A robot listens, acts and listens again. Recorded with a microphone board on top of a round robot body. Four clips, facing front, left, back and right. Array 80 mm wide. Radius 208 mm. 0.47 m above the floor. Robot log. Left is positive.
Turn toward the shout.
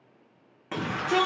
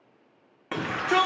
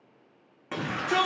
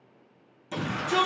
note: The shout: 90° left.
cmd yaw +90
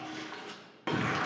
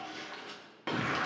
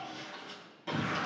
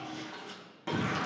note: The shout is now 25° left.
cmd yaw +25
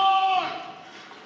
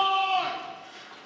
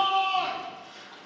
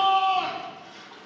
note: The shout is now 10° left.
cmd yaw +10
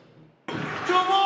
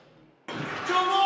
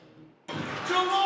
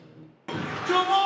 end: Facing the shout.